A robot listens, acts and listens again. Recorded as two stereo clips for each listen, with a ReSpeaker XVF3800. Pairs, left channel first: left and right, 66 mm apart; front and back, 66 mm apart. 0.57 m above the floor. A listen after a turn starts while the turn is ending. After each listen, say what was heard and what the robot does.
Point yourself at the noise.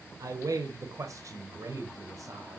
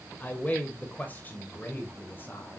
The man speaking: 60° right. Turn 60° right.
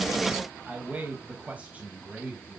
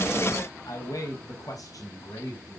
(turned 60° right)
The man speaking is now 20° right. Turn 20° right.
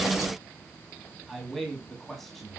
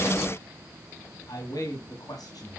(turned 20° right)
Facing the man speaking, over 4 m away.